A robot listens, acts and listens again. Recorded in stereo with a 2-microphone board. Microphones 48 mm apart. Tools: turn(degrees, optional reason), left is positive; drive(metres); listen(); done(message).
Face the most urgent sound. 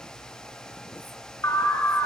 turn(degrees=70, reason="The alarm: about 70° left or 110° left.")
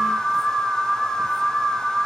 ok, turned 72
done("Found it: an alarm, straight ahead.")